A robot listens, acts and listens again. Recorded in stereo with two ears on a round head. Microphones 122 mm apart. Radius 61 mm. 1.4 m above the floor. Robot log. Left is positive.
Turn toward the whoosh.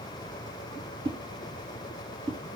note: The whoosh: about 40° right or 140° right.
cmd yaw -40
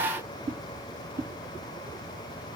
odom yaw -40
note: So it is at 95° right.
cmd yaw -95
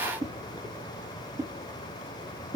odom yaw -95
note: The whoosh is now 25° right.
cmd yaw -25
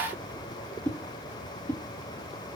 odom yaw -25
note: The whoosh is now 15° left.
cmd yaw +15
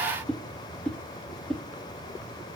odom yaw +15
end: Facing the whoosh, 1 to 2 m away.